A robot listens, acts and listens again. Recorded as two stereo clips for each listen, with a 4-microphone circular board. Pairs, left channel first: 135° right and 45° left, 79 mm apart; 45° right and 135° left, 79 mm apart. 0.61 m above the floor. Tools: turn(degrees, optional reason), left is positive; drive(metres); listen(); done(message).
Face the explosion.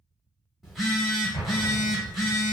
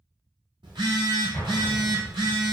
turn(degrees=-85, reason="The explosion: 85° right.")
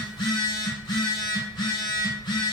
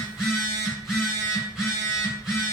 done("Facing where the explosion came from. I can't hear it now.")